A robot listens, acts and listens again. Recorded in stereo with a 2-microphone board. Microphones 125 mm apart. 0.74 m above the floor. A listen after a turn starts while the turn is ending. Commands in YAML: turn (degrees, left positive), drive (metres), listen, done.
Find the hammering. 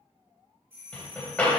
turn: 30
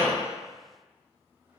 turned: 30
listen: true
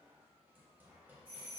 listen: true
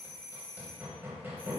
turn: -20
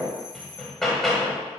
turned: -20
done: "Facing the hammering."